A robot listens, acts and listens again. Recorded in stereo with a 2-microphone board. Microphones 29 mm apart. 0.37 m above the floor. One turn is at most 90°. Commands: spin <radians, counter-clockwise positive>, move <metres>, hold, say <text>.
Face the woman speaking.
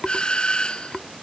hold
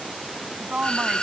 spin -0.87
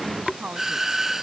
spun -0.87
spin -1.05
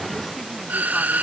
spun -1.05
hold
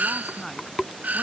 spin 0.17
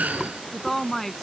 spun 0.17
spin 0.17
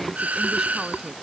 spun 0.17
hold
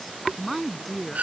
say Facing the woman speaking.